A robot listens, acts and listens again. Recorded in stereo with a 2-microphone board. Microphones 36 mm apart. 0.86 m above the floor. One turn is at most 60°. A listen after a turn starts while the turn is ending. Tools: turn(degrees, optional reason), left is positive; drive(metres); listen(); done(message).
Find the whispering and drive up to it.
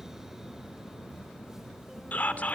turn(degrees=45, reason="The whispering: about 45° left or 135° left.")
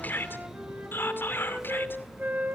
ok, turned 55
turn(degrees=60, reason="So it is at 85° left.")
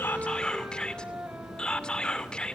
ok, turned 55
turn(degrees=25, reason="The whispering is now 25° left.")
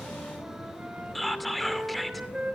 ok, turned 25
drive(metres=1.0)
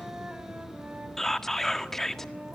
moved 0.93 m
turn(degrees=10, reason="The whispering is now 10° left.")
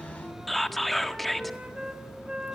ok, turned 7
drive(metres=1.0)
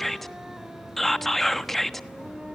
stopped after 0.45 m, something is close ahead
turn(degrees=10, reason="The whispering is now 10° left.")
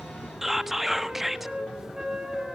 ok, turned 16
done("I am next to the whispering.")